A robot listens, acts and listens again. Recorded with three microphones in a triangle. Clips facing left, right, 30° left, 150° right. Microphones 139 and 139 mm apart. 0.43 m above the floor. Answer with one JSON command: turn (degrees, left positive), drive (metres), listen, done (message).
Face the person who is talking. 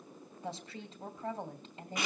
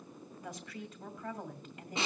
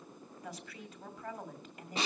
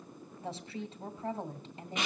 {"turn": 150}
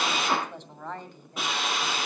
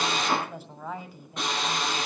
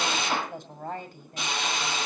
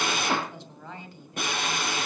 {"turn": -10}
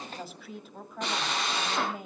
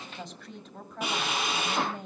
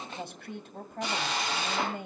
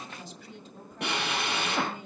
{"done": "Facing the woman speaking, 2 to 4 m away."}